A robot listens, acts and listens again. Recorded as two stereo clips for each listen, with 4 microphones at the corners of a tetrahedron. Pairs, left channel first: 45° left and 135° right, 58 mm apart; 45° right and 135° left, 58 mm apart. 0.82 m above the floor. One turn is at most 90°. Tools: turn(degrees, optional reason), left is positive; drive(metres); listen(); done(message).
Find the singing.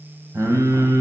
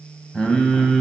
turn(degrees=-90, reason="The singing: 125° right.")
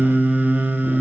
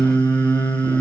turn(degrees=-70, reason="The singing is now 70° right.")
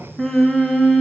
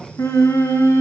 turn(degrees=-45, reason="The singing is now 45° right.")
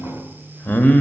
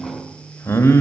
turn(degrees=-15, reason="The singing is now 15° right.")
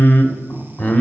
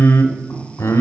turn(degrees=-15, reason="The singing is now 15° right.")
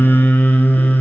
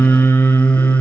done("Facing the singing.")